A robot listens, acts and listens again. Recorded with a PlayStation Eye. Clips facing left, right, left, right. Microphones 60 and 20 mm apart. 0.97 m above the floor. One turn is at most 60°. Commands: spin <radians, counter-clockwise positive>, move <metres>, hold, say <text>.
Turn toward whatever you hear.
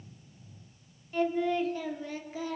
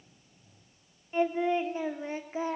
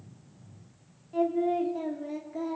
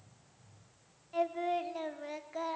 spin -0.61
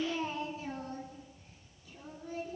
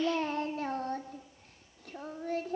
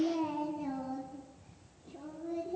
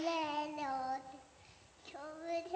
spin -1.05
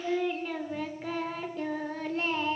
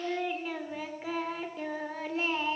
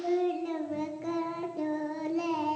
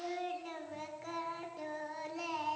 say Facing the singing.